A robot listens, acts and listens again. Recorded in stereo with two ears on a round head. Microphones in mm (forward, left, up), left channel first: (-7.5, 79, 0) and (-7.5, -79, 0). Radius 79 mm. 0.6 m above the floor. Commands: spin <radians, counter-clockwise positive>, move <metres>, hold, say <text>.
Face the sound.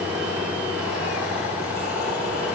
hold
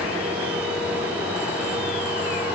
hold
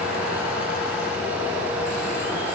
say I can't make out anything to turn to.